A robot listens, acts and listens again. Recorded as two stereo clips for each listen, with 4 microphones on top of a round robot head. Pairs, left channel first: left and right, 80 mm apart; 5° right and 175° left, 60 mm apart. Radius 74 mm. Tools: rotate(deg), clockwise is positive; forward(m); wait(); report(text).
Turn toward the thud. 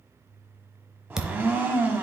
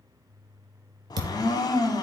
rotate(175)
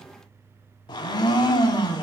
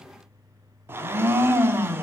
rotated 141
rotate(30)
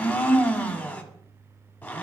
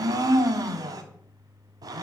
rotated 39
report("Facing where the thud came from. I can't hear it now.")